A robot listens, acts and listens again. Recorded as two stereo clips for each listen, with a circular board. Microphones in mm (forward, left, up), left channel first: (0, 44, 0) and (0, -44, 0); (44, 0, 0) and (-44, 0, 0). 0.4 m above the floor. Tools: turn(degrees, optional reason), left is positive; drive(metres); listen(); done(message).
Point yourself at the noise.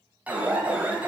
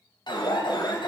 turn(degrees=-15, reason="The alarm: 15° right.")
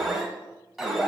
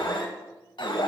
done("Found it: an alarm, straight ahead, 1 to 2 m away.")